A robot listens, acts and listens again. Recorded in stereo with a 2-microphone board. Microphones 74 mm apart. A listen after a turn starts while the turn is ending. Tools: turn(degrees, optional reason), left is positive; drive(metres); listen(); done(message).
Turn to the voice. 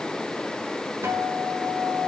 listen()
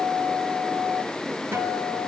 listen()
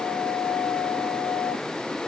done("I can't make out anyone speaking to turn to.")